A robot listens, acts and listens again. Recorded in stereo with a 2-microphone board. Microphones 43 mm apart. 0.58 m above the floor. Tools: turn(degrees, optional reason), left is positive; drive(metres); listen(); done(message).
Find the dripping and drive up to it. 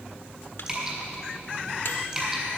turn(degrees=-20, reason="The dripping: about 20° right or 160° right.")
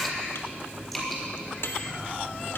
drive(metres=1.0)
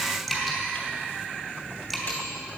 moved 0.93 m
drive(metres=1.0)
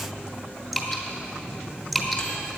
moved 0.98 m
drive(metres=1.0)
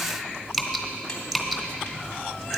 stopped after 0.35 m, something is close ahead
done("Arrived at the dripping, straight ahead.")